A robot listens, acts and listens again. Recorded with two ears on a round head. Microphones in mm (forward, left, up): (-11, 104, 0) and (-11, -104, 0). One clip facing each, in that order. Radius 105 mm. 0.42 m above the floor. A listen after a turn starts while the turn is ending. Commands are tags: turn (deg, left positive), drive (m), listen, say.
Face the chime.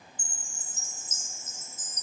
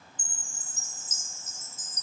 <turn deg="-70"/>
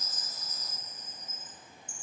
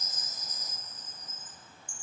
<turn deg="-30"/>
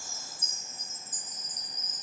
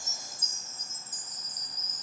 <turn deg="-10"/>
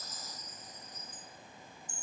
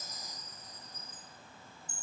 <say>Found it: a chime, straight ahead, 1 to 2 m away.</say>